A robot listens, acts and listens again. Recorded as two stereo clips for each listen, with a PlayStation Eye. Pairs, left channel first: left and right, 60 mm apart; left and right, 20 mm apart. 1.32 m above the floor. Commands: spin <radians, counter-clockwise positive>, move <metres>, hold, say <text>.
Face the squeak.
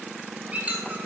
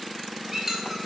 spin -0.35
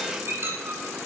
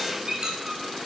spin -2.44
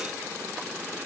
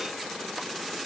hold
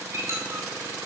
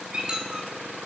spin -0.96
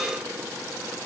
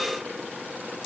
hold
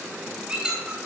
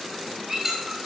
spin -0.35
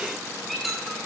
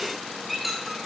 say Found it: a squeak, straight ahead.